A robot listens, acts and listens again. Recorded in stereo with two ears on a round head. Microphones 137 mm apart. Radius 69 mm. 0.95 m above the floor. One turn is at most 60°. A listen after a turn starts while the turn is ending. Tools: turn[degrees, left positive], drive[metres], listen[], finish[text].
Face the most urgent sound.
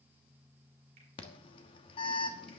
Thought: The alarm: about 35° left or 145° left.
Action: turn[35]
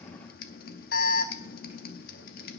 Thought: So it is at 115° left.
Action: turn[60]
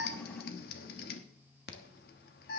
Thought: The alarm is now 70° left.
Action: turn[60]
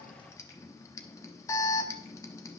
Thought: The alarm is now 20° left.
Action: turn[20]
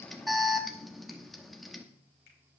Action: finish[Facing the alarm, 1 to 2 m away.]